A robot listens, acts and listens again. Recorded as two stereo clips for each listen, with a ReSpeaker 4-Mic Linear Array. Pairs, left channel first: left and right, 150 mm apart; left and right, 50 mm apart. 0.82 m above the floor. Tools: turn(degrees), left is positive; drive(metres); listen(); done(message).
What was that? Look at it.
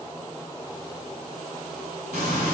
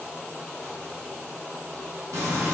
turn(degrees=-90)
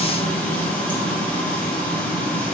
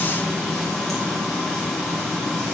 turn(degrees=10)
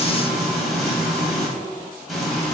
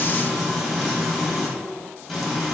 done("Facing the frying, 2 to 4 m away.")